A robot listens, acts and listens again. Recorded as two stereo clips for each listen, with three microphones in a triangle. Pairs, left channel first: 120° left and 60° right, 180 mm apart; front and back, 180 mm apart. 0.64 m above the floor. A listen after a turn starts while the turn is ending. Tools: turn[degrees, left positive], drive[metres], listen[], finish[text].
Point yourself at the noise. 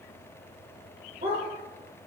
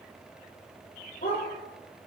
Thought: The dog barking: 30° right.
Action: turn[-30]
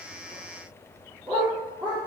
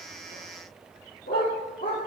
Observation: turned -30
Action: finish[Found it: a dog barking, straight ahead.]